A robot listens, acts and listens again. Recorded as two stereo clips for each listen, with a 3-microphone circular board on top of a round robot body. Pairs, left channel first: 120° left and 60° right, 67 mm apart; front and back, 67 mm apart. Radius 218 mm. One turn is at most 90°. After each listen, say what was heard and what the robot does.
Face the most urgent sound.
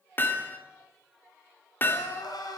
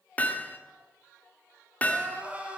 The crying: 110° left. Turn 90° left.
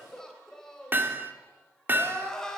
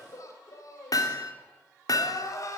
The crying is now 40° left. Turn 40° left.
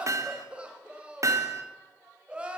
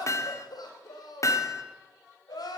The crying is now 15° left. Turn 15° left.
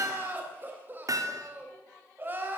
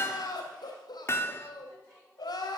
Found it: crying, straight ahead, 2 to 4 m away.